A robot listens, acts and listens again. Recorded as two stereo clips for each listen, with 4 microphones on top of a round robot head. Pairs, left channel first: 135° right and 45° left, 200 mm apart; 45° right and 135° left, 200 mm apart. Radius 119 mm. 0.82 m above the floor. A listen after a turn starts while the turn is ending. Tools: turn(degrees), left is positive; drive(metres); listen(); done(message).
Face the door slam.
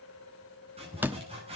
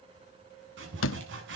turn(degrees=-35)
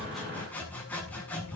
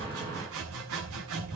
done("Facing where the door slam came from. I can't hear it now.")